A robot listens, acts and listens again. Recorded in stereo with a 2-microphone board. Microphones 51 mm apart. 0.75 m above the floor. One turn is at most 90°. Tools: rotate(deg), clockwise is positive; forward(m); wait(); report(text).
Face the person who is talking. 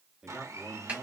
rotate(30)
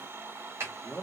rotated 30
rotate(-20)
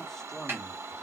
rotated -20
rotate(-10)
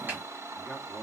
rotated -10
report("Found it: a man speaking, straight ahead, under 1 m away.")